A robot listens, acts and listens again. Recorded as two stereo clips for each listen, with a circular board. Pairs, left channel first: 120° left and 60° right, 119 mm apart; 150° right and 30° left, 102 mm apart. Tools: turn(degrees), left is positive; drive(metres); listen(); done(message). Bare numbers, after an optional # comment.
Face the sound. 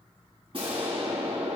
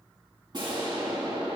# The explosion: 15° right.
turn(-15)
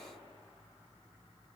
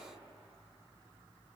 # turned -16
done("Facing where the explosion came from. I can't hear it now.")